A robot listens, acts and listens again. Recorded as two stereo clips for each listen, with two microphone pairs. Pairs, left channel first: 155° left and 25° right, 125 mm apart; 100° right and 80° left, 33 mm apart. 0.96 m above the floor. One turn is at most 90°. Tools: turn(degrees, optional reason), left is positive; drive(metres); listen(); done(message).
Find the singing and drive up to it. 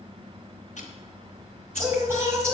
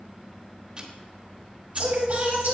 turn(degrees=45, reason="The singing: 45° left.")
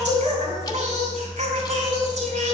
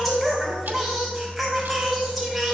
drive(metres=1.0)
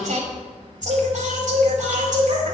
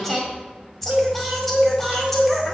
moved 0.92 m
turn(degrees=-15, reason="The singing is now 15° right.")
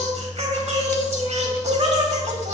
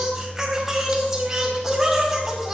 drive(metres=1.0)
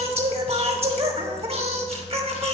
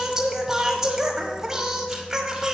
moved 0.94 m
turn(degrees=10, reason="The singing is now 10° left.")
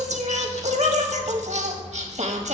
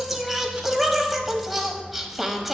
drive(metres=1.0)
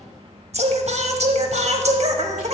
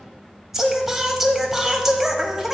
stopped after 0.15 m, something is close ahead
done("Arrived at the singing, straight ahead.")